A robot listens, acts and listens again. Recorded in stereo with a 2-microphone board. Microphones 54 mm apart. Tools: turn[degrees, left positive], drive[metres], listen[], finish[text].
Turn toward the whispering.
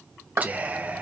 Thought: The whispering: about 30° right or 150° right.
Action: turn[-30]
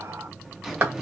Action: listen[]
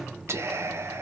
Thought: So it is at 115° right.
Action: turn[-115]
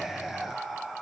Action: finish[Facing the whispering.]